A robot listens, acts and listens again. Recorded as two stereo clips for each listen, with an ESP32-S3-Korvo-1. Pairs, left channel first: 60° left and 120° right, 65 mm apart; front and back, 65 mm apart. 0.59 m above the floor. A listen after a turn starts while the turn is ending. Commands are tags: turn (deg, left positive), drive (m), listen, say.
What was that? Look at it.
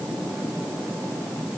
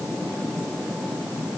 <listen/>
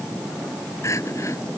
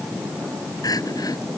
<turn deg="15"/>
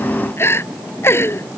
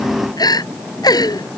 <say>Found it: crying, straight ahead.</say>